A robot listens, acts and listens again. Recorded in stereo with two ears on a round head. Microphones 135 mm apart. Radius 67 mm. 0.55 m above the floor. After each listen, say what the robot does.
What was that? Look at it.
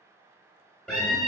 Turn 30° left.
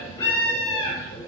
Turn 145° left.
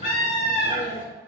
Turn 55° left.
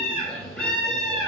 Facing the scream.